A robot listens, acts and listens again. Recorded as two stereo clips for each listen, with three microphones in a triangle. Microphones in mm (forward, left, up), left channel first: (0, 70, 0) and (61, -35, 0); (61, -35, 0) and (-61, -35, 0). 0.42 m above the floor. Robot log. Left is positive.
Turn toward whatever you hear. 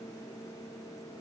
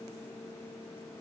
cmd idle
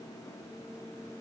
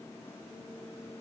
cmd idle
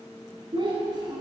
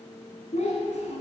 end: Facing the child speaking, 2 to 4 m away.